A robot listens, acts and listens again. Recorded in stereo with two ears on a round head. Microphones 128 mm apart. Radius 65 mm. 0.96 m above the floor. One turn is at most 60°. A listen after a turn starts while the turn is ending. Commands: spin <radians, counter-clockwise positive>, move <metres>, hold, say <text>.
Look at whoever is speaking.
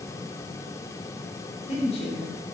spin 0.79
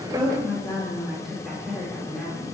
say Facing the woman speaking, 2 to 4 m away.